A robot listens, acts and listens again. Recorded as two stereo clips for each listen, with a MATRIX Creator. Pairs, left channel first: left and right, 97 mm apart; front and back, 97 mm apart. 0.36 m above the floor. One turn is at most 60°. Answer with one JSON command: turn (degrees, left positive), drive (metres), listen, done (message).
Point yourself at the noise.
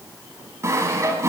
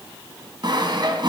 {"turn": -60}
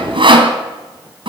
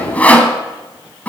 {"turn": -60}
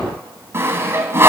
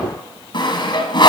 {"turn": -30}
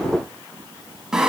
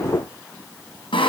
{"done": "Facing the sawing."}